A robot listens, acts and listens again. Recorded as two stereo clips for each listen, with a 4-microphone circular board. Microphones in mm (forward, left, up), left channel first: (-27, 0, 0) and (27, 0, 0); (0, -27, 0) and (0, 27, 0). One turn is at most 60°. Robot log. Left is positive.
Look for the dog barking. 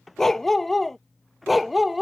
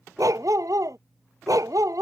note: The dog barking: 85° left.
cmd yaw +60
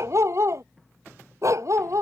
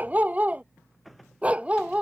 note: The dog barking is now 20° left.
cmd yaw +20
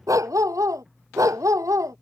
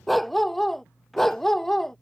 end: Facing the dog barking.